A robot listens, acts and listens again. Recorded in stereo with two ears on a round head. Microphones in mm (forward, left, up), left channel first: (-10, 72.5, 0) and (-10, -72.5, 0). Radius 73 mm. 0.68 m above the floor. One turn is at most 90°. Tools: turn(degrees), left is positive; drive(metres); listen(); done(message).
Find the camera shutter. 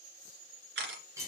turn(degrees=-90)
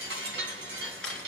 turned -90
done("Facing the camera shutter, 2 to 4 m away.")